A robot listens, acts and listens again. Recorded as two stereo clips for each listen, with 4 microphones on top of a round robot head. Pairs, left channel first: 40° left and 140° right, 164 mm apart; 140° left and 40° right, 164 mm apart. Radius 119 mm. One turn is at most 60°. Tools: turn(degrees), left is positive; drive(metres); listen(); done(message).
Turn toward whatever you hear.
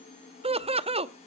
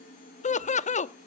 turn(degrees=60)
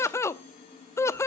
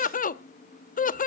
turn(degrees=60)
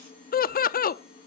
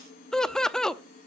turn(degrees=50)
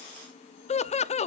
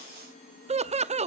done("Facing the laughter.")